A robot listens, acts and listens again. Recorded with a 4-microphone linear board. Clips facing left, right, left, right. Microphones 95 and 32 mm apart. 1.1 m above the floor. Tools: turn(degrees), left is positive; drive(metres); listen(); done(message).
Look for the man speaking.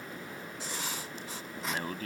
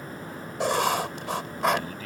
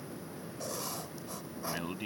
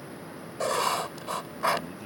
turn(degrees=45)
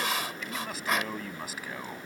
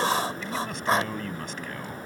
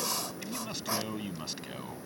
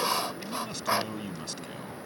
done("Found it: a man speaking, straight ahead.")